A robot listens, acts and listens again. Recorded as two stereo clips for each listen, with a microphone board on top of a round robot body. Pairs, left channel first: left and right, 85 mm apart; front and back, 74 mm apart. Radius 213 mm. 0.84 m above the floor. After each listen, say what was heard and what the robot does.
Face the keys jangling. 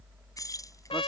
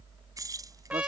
The keys jangling: 140° left. Turn 140° left.
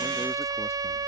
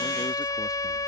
Keep listening.
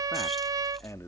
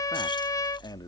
Keep listening.
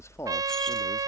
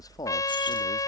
I heard keys jangling from this way, but can't make it out now.